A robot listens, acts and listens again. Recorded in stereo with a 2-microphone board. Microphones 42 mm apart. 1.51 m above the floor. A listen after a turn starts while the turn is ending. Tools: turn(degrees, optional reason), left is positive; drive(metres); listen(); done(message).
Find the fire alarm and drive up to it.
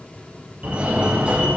turn(degrees=-35, reason="The fire alarm: about 35° right or 145° right.")
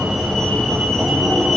drive(metres=1.0)
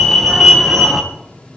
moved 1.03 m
drive(metres=1.0)
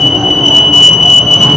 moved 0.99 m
drive(metres=1.0)
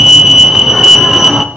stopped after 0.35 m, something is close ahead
turn(degrees=-10, reason="The fire alarm is now 10° right.")
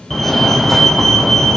done("Arrived at the fire alarm, straight ahead.")